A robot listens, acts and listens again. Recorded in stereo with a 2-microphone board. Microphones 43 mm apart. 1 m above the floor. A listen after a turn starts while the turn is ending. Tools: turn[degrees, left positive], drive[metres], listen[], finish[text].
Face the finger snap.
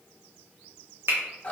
Thought: The finger snap: about 70° right or 110° right.
Action: turn[-70]
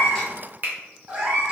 Thought: So it is at 40° right.
Action: turn[-40]
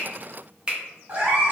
Thought: The finger snap is now 25° right.
Action: turn[-25]
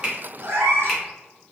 Action: listen[]
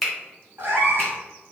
Action: finish[Found it: a finger snap, straight ahead, under 1 m away.]